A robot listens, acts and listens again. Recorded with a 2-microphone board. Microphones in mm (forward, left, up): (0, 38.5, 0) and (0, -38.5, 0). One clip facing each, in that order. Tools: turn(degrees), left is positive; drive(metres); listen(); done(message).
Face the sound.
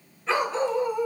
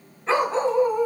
turn(degrees=-45)
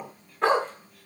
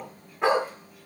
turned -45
turn(degrees=-10)
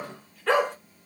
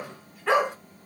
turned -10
turn(degrees=-15)
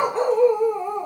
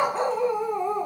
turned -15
turn(degrees=-15)
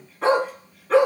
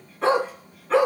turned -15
done("Facing the dog barking.")